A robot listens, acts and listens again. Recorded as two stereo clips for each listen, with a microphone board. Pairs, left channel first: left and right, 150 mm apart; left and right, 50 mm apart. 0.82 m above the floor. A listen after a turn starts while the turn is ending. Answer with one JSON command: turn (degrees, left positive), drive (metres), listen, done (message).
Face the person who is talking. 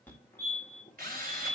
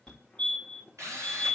{"listen": true}
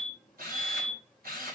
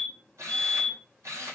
{"listen": true}
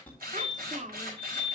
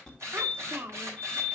{"turn": -55}
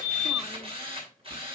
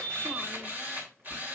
{"listen": true}
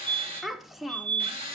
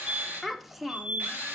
{"done": "Found it: a child speaking, straight ahead."}